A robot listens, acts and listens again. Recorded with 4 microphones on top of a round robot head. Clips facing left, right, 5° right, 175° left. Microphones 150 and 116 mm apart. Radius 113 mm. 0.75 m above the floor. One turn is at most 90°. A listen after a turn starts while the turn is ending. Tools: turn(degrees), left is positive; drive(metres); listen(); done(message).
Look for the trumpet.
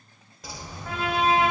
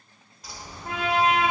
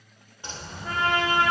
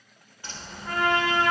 turn(degrees=-20)
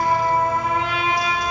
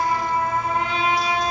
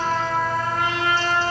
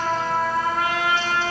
done("Found it: a trumpet, straight ahead, 2 to 4 m away.")